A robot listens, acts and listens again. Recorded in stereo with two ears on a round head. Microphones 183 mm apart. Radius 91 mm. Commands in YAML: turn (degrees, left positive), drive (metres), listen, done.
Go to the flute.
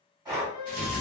turn: -70
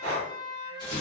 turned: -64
turn: -10
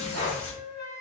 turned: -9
drive: 1.0
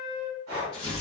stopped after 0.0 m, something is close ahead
done: "Something is in my way. I am facing the flute but have not reached it."